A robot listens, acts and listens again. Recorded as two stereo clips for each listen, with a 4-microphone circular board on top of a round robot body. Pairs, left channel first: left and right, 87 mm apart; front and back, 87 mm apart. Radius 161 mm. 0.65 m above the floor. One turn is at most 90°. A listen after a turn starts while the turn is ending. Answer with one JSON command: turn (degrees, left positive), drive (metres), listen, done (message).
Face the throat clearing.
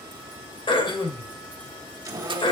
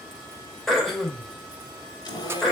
{"turn": 90}
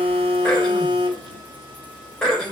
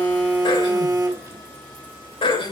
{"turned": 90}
{"turn": 10}
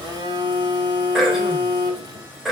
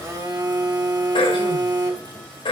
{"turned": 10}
{"done": "Found it: throat clearing, straight ahead, 2 to 4 m away."}